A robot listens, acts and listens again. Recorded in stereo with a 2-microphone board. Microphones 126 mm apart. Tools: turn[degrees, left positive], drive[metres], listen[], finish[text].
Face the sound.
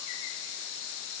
Action: listen[]
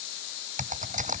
Action: turn[-90]
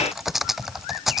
Action: finish[Found it: typing on a keyboard, straight ahead.]